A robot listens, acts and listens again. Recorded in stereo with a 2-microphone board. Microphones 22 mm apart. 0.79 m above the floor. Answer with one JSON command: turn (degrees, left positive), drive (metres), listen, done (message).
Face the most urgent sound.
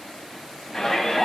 {"turn": 25}
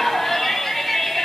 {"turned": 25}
{"done": "Found it: a shout, straight ahead, over 4 m away."}